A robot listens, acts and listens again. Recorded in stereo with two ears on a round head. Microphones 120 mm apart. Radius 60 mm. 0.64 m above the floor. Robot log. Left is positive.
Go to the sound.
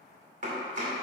note: The chopping: about 60° right or 120° right.
cmd yaw -60
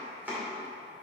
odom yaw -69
note: So it is at 15° right.
cmd yaw -15
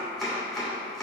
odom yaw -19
cmd fwd 1.0
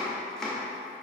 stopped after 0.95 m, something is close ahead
end: I am next to the chopping.